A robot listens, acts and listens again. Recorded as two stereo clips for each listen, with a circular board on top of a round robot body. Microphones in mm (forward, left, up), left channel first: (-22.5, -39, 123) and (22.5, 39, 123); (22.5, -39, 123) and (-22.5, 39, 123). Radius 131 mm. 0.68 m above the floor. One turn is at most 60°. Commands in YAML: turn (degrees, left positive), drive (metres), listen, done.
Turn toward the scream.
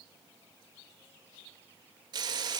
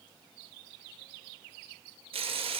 listen: true
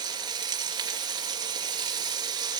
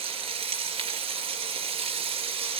listen: true
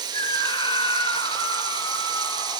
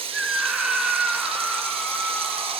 turn: -60
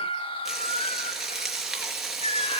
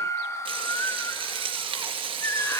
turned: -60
turn: -60
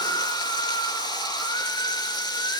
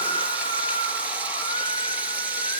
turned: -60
turn: -60
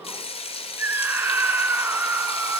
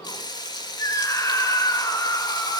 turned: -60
turn: -10
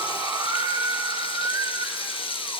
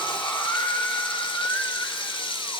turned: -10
done: "Found it: a scream, straight ahead, 2 to 4 m away."